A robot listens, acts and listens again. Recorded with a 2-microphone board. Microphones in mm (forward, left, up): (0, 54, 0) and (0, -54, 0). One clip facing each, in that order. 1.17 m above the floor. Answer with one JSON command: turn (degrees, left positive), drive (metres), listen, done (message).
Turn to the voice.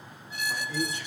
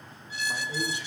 {"turn": -20}
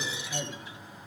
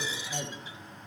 {"done": "Facing the man speaking."}